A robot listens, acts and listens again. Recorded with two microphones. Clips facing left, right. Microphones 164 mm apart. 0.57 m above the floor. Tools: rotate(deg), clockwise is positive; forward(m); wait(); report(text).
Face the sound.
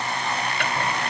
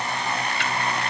rotate(-55)
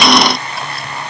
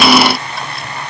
wait()
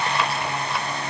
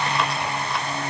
wait()
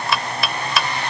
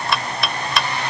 report("Facing the chopping.")